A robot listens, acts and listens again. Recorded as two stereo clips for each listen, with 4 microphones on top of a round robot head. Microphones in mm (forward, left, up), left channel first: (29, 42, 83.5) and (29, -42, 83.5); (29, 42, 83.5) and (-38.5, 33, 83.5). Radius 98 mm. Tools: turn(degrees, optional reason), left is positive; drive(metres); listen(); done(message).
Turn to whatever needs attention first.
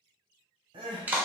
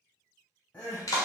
turn(degrees=-65, reason="The crying: 65° right.")
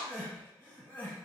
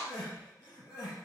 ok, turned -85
turn(degrees=20, reason="The crying is now 20° left.")
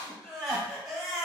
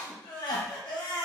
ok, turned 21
done("Found it: crying, straight ahead.")